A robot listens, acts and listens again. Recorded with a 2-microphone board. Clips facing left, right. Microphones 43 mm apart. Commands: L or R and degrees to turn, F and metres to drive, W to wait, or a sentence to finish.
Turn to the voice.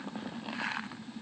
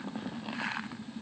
W
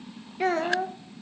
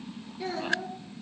L50
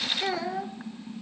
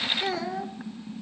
Facing the child speaking.